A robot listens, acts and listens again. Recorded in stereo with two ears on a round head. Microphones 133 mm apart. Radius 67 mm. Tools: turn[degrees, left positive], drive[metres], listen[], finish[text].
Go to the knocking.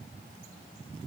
Action: listen[]
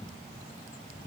Action: listen[]
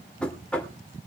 Action: turn[30]
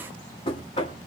Thought: So it is at 140° left.
Action: turn[140]
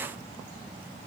Action: listen[]
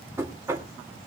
Thought: The knocking is now 20° right.
Action: turn[-20]
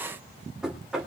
Action: drive[1.0]
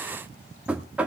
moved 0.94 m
Thought: The knocking is now 10° right.
Action: turn[-10]
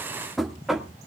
Action: drive[1.0]
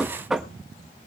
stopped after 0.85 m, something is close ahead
Action: finish[Arrived at the knocking, straight ahead.]